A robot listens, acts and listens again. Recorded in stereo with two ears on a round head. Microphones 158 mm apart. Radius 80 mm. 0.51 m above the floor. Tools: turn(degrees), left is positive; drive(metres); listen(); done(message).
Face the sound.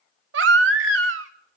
turn(degrees=-75)
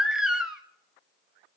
done("Facing the baby crying, 1 to 2 m away.")